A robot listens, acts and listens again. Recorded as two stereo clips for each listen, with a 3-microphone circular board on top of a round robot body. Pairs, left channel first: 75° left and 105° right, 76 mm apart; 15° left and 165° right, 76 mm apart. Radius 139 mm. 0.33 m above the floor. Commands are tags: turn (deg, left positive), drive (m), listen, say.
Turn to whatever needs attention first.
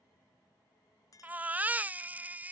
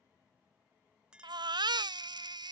<turn deg="-170"/>
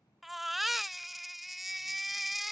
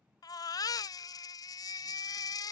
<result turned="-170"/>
<turn deg="-15"/>
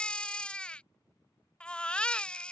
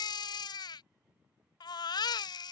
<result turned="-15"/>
<say>Found it: a baby crying, straight ahead.</say>